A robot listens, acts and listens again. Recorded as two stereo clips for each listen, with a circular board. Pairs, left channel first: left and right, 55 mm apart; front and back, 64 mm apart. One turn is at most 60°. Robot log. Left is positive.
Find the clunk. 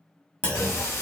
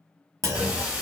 note: The clunk: 155° left.
cmd yaw +60
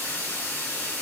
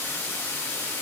note: Nothing new. It was at 95° left.
cmd yaw +60
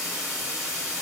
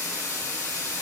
note: Nothing new. It was at 35° left.
cmd yaw +35
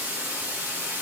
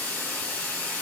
end: Facing where the clunk came from. I can't hear it now.